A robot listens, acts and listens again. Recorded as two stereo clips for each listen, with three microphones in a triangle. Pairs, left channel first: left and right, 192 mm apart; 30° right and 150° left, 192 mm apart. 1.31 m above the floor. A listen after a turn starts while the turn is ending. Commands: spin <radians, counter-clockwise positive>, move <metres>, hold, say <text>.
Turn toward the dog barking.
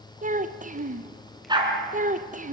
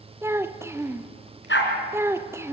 spin -0.44
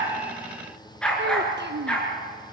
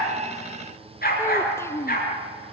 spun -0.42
say Found it: a dog barking, straight ahead, over 4 m away.